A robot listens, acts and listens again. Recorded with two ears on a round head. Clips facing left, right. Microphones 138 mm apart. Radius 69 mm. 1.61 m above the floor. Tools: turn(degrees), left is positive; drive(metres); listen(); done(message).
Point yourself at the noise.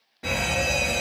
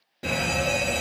turn(degrees=-35)
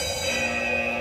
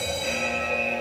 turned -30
turn(degrees=-10)
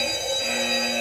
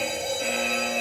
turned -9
done("Facing the fire alarm.")